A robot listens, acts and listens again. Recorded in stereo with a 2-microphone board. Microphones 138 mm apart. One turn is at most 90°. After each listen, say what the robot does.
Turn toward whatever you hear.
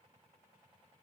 Keep listening.
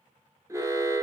Turn 20° right.
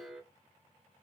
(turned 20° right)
Facing the alarm.